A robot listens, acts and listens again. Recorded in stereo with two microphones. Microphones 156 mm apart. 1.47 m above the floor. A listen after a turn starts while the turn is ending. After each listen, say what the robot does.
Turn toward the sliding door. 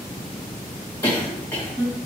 Keep listening.
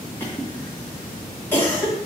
Keep listening.
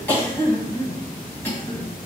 I can't make out a sliding door, only a cough.